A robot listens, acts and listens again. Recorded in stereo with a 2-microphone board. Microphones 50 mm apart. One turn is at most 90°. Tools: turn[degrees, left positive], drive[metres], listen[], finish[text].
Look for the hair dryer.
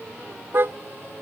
Action: listen[]
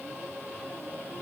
Action: listen[]
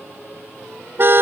Action: finish[I can't make out a hair dryer, only a car horn.]